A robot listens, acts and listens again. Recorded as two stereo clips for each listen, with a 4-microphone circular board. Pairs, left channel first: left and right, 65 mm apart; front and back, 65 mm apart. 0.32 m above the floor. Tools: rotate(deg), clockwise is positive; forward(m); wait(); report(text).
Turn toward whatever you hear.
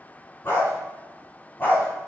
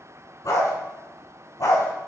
rotate(-25)
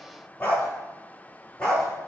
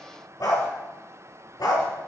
rotate(-15)
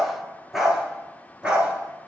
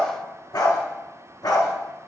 rotate(15)
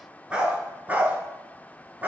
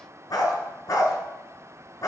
rotate(25)
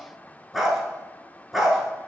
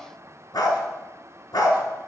report("Facing the dog barking, 1 to 2 m away.")